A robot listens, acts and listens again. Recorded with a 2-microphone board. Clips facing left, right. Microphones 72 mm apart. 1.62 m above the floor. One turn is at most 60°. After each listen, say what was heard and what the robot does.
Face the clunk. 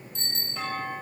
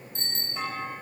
Turn 30° right.
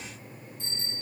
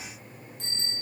Keep listening.
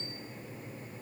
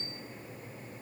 I heard a clunk, but can't make it out now. It was about 20° left or 140° right.